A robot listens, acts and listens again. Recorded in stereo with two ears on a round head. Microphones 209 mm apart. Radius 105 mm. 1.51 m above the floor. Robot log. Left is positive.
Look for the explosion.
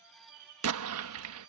note: The explosion: about 70° right or 110° right.
cmd yaw -70
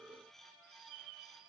cmd idle
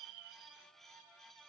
end: I heard an explosion, but can't make it out now. It was about straight ahead or 40° right.